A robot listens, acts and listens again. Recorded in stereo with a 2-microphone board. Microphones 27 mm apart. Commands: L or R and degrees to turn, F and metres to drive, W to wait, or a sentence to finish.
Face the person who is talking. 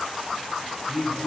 R25
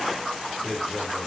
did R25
Found it: a man speaking, straight ahead.